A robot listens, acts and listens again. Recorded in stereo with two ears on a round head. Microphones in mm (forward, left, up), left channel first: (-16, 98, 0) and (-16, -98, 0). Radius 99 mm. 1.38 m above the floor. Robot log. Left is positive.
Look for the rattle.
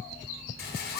note: The rattle: about 45° left or 135° left.
cmd yaw +45
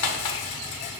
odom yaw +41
note: So it is at 90° left.
cmd yaw +90
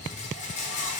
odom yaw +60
note: The rattle is now 35° left.
cmd yaw +35
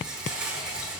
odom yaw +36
end: Found it: a rattle, straight ahead, 1 to 2 m away.